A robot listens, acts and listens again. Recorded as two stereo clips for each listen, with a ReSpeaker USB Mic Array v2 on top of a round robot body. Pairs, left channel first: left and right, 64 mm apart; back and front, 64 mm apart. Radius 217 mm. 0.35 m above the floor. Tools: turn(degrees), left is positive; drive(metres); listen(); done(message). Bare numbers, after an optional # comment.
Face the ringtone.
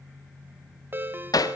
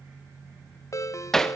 # The ringtone: 145° right.
turn(-145)
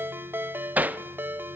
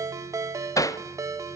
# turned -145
# The ringtone is now 35° right.
turn(-35)
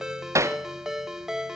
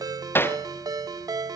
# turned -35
# The ringtone is now 10° right.
turn(-10)
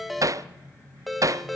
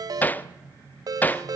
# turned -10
done("Facing the ringtone.")